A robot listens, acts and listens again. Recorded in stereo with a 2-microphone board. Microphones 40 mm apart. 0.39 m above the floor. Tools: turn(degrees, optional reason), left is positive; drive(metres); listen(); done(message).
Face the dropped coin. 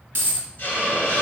turn(degrees=-70, reason="The dropped coin: about 70° right or 110° right.")
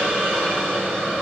listen()
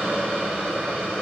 done("I heard a dropped coin, but can't make it out now. It was about straight ahead or 40° right.")